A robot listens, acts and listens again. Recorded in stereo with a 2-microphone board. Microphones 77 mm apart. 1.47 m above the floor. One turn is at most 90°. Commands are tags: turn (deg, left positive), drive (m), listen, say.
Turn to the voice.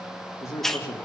<turn deg="40"/>
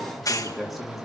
<say>Found it: a man speaking, straight ahead.</say>